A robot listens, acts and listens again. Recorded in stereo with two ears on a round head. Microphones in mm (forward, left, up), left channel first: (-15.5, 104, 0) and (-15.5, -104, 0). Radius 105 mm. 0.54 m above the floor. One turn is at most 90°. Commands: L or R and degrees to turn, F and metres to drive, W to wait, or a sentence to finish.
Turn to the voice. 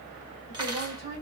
R25
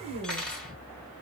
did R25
R90
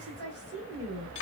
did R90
R70
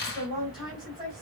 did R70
Facing the woman speaking.